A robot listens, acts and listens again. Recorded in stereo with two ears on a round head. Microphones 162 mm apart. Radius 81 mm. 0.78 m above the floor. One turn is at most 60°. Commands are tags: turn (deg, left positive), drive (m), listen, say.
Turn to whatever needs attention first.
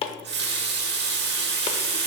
<listen/>
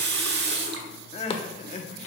<turn deg="40"/>
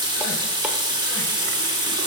<listen/>
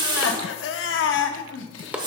<turn deg="60"/>
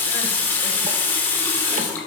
<turn deg="40"/>
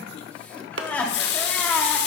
<turn deg="10"/>
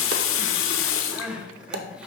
<say>Found it: crying, straight ahead, under 1 m away.</say>